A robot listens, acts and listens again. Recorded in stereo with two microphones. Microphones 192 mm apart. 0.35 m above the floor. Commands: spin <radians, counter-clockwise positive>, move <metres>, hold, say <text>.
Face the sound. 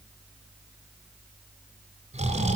spin -0.61
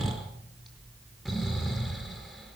say Found it: snoring, straight ahead, 2 to 4 m away.